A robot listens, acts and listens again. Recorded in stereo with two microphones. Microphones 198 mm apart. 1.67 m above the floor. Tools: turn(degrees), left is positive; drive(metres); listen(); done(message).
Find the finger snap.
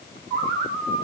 listen()
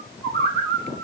listen()
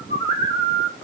done("I can't make out a finger snap, only a bird.")